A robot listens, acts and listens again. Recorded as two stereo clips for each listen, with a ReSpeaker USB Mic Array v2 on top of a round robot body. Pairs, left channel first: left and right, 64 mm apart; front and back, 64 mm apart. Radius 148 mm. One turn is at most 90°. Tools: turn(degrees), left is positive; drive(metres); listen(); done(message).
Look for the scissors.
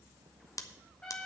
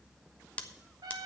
turn(degrees=70)
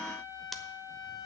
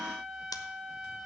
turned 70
done("Found it: scissors, straight ahead.")